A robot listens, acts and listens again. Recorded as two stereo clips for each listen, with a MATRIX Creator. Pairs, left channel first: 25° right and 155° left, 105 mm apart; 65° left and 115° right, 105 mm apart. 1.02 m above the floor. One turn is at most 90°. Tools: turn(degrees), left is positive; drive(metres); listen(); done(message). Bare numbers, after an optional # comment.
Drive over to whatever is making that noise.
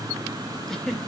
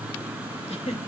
# The giggle: 65° left.
turn(65)
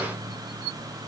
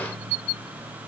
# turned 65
listen()
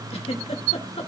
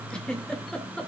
# The giggle is now 15° right.
turn(-15)
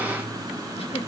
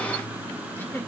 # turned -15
drive(1.0)
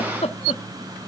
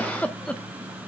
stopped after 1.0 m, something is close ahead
# The giggle is now 10° right.
turn(-10)
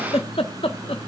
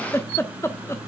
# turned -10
done("I am next to the giggle.")